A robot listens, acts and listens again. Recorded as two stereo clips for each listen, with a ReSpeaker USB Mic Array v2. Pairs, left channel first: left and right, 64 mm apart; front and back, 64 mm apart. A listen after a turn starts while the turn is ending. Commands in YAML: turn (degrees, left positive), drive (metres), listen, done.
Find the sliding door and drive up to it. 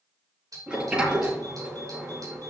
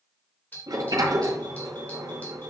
turn: -165
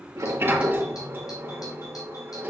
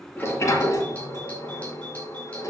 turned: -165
turn: -35
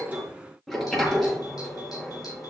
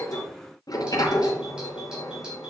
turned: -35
drive: 1.0
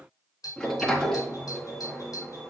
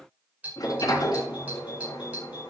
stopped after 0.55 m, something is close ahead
turn: 10
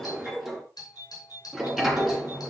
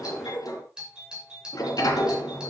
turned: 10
done: "Blocked. The sliding door is further on, straight ahead."